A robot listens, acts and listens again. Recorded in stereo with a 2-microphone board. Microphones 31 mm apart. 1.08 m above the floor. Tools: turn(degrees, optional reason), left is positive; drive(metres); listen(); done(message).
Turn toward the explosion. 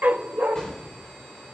turn(degrees=20, reason="The explosion: about 20° left or 160° left.")
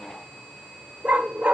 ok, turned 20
listen()
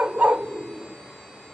done("I heard an explosion, but can't make it out now. It was about straight ahead or 140° left.")